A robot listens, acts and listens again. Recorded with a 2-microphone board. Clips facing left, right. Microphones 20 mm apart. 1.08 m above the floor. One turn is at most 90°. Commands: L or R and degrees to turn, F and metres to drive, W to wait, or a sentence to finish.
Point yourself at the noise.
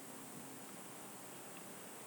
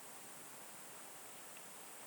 W
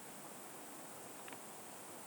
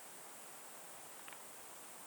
W
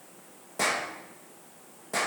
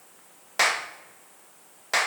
R60
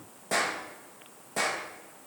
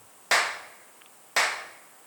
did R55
R60
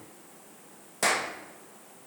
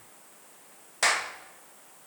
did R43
R20
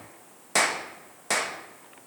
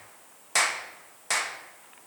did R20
Found it: a clap, straight ahead.